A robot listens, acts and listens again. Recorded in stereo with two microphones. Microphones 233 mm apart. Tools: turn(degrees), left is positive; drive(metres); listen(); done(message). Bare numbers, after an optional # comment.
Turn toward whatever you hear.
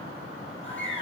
# The bird: about 55° left or 125° left.
turn(55)
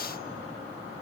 listen()
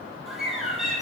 done("Found it: a bird, straight ahead, over 4 m away.")